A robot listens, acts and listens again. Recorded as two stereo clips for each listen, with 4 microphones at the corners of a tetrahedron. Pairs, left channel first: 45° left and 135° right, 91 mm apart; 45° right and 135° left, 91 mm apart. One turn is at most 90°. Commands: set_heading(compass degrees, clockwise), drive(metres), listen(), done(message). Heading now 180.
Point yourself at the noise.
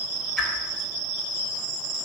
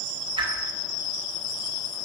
set_heading(90)
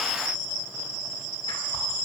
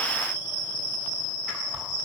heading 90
set_heading(45)
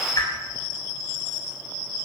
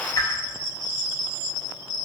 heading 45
done("Found it: a whoosh, straight ahead, 2 to 4 m away.")